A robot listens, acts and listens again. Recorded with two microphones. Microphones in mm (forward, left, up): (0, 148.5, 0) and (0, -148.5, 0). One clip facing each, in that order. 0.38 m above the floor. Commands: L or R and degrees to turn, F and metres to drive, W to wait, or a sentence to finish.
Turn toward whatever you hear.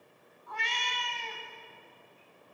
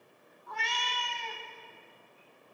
R50
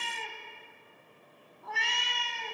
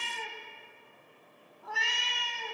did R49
Found it: a cat meowing, straight ahead, 1 to 2 m away.